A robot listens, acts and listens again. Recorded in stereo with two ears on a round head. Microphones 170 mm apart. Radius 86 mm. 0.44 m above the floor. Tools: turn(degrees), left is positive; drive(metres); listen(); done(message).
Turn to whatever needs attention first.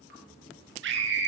turn(degrees=-70)
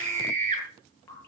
turn(degrees=-40)
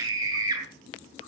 turn(degrees=-20)
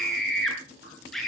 done("Found it: a scream, straight ahead, over 4 m away.")